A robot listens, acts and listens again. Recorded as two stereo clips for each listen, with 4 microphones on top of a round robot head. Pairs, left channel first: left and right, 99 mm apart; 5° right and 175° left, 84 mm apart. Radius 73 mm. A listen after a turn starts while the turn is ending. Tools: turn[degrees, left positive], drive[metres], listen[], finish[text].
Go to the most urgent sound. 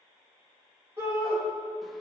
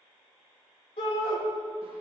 Thought: The shout: 20° right.
Action: turn[-20]
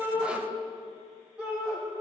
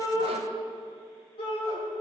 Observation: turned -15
Action: drive[1.0]
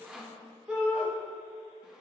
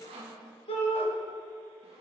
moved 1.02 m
Action: drive[1.0]
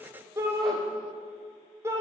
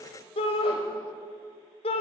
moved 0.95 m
Thought: The shout is now 20° right.
Action: turn[-20]
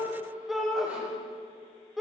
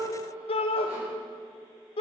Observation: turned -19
Action: drive[1.0]
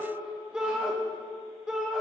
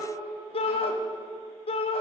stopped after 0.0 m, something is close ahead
Action: finish[I am next to the shout.]